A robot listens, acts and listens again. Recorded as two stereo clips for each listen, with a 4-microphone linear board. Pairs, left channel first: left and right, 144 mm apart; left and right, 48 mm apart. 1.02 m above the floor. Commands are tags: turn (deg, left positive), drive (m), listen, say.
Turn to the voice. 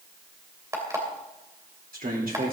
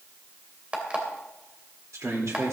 <turn deg="-90"/>
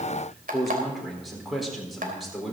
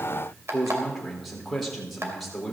<say>Facing the man speaking.</say>